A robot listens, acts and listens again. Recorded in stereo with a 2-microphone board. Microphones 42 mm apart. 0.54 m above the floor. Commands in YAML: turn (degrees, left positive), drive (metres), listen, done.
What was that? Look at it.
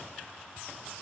listen: true
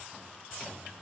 listen: true
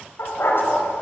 turn: 60
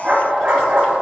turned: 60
turn: -30
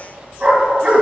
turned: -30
turn: -25
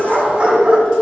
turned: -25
turn: -25
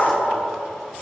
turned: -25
done: "Facing the dog barking."